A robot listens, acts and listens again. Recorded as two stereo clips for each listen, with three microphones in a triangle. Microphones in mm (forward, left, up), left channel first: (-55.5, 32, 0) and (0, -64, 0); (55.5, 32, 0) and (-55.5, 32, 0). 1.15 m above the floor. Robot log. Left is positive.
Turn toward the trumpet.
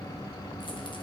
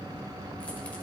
cmd idle
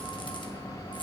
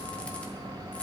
cmd idle
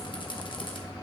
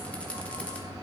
end: I can't make out a trumpet to turn to.